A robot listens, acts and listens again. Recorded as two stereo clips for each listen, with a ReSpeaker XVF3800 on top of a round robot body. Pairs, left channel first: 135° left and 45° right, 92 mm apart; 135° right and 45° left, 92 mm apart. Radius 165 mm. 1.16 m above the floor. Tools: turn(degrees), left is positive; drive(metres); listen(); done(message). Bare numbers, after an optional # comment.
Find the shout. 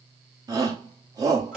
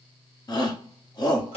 # The shout: 95° right.
turn(-95)
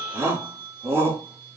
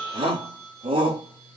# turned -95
# The shout is now 20° left.
turn(20)
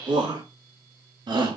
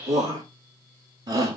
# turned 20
done("Found it: a shout, straight ahead.")